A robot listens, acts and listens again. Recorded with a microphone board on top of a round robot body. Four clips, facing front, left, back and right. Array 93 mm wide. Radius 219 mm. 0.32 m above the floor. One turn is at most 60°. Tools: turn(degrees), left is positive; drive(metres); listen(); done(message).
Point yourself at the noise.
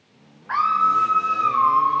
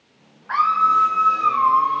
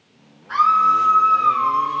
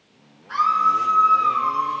turn(degrees=45)
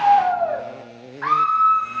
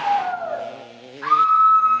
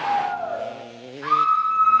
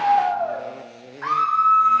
turn(degrees=-25)
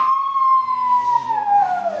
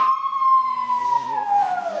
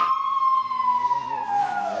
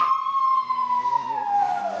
done("Found it: a scream, straight ahead.")